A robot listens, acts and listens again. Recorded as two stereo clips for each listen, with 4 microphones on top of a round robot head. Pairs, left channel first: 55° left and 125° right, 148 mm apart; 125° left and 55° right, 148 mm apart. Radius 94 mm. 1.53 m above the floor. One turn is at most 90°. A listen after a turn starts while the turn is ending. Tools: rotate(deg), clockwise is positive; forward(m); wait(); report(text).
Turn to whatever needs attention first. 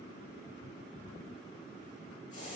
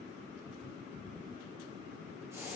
wait()
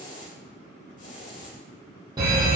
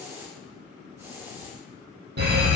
rotate(60)
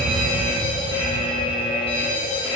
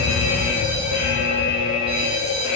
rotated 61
report("Facing the fire alarm, 2 to 4 m away.")